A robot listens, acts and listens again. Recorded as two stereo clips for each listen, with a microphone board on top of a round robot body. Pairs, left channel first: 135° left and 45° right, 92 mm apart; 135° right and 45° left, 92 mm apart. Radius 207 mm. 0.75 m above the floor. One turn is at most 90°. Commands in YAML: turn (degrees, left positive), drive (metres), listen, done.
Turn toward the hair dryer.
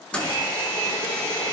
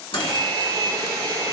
turn: 90
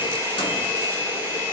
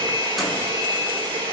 turn: 15
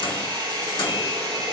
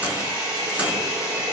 done: "Found it: a hair dryer, straight ahead, over 4 m away."